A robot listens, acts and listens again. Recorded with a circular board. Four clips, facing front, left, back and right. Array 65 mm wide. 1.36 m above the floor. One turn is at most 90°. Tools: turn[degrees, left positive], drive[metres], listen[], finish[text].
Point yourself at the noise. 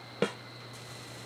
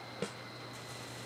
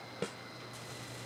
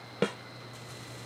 Thought: The snare drum: 45° right.
Action: turn[-45]
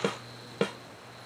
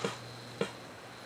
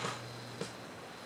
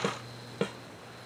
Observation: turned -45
Action: finish[Facing the snare drum.]